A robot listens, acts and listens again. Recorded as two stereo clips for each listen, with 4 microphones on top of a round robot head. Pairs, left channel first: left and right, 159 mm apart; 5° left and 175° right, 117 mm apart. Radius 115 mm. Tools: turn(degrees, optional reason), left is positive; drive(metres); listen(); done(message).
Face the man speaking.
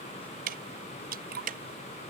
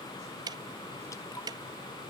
listen()
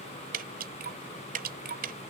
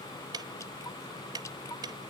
listen()
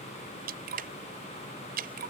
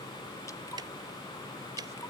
done("I can't make out a man speaking, only ticking and dripping.")